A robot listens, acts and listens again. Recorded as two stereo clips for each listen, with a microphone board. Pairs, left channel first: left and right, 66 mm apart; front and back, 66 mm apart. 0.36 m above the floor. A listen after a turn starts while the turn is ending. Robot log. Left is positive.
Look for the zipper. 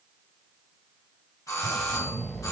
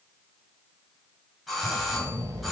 note: The zipper: straight behind.
cmd yaw +180
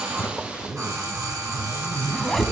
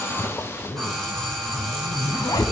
end: Facing the zipper.